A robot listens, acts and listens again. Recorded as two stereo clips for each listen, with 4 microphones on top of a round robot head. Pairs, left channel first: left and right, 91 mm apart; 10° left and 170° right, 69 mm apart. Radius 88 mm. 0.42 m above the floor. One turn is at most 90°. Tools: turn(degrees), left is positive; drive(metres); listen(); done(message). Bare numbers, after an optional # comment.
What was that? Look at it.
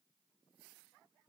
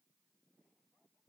listen()
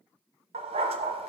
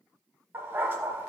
# The dog barking: 105° right.
turn(-90)
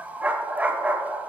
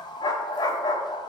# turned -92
# The dog barking is now 15° right.
turn(-15)
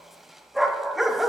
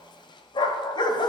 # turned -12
done("Facing the dog barking, under 1 m away.")